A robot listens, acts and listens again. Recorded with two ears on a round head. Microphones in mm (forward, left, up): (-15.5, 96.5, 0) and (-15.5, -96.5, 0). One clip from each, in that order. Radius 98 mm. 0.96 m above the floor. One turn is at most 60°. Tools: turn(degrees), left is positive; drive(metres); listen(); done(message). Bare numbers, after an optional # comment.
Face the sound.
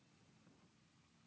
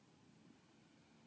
listen()
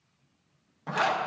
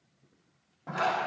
# The zipper: about 70° left or 110° left.
turn(60)
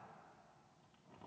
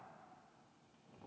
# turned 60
listen()
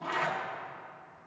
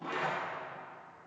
# So it is at 15° left.
turn(15)
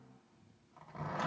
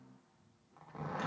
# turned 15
done("Found it: a zipper, straight ahead, 1 to 2 m away.")